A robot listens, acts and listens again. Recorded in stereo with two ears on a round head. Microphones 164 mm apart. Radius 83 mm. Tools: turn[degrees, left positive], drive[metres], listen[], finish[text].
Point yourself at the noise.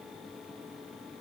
Action: listen[]
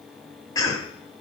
Thought: The cough: about 20° left or 160° left.
Action: turn[20]
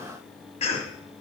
Thought: So it is at 140° left.
Action: turn[140]
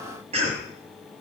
Thought: The cough is now 35° right.
Action: turn[-35]
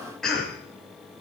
Action: finish[Found it: a cough, straight ahead.]